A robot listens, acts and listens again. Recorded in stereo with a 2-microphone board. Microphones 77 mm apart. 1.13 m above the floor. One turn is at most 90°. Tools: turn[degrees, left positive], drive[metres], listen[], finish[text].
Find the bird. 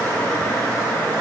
Action: listen[]
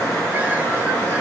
Action: listen[]
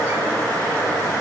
Action: finish[I can't make out a bird to turn to.]